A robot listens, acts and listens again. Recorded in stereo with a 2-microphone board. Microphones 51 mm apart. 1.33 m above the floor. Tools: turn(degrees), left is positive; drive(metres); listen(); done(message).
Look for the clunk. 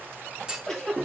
turn(degrees=-15)
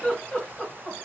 listen()
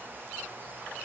done("I heard a clunk, but can't make it out now. It was about straight ahead or 150° right.")